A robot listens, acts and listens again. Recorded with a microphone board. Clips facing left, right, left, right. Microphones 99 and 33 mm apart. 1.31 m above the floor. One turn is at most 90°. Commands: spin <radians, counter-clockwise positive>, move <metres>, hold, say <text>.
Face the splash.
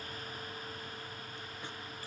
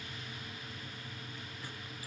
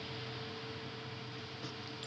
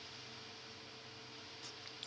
hold
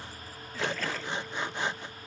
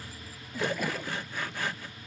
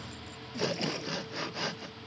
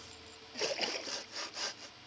spin -0.52
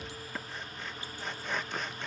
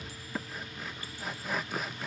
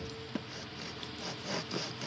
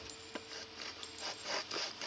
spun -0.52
hold
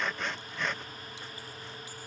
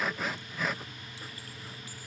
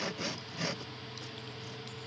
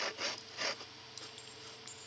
say I heard a splash, but can't make it out now. It was about 15° left or 135° right.